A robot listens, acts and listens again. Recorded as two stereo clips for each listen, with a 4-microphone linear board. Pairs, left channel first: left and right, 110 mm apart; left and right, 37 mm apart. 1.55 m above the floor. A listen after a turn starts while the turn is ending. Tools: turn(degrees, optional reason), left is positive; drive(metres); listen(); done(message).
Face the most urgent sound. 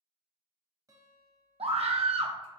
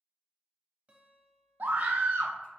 turn(degrees=-65, reason="The scream: about 65° right or 115° right.")
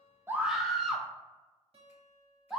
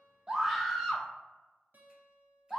done("Found it: a scream, straight ahead.")